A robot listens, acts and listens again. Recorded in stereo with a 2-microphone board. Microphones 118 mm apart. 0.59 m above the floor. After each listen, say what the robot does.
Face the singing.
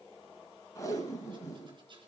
Keep listening.
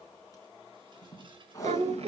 Turn 55° right.
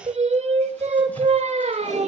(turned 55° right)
Turn 70° right.
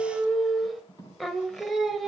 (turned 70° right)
Found it: singing, straight ahead, 1 to 2 m away.